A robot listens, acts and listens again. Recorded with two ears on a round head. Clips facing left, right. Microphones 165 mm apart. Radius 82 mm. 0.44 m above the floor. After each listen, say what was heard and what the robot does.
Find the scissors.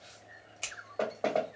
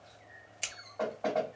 The scissors: about 15° right or 165° right. Turn 15° right.
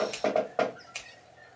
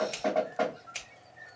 Facing the scissors.